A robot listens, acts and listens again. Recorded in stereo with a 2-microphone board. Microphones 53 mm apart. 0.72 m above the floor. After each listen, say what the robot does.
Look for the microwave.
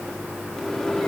Turn 30° left.
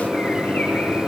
Turn 20° right.
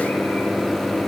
Found it: a microwave, straight ahead.